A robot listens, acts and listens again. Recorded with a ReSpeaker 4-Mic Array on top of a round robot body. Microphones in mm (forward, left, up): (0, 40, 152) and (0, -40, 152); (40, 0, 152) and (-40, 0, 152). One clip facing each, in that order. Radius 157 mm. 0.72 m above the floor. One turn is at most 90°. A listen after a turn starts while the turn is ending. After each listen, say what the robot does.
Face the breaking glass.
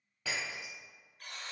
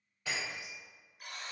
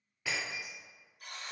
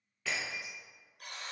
Turn 80° left.
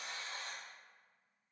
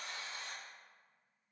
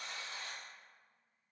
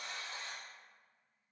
Facing where the breaking glass came from. I can't hear it now.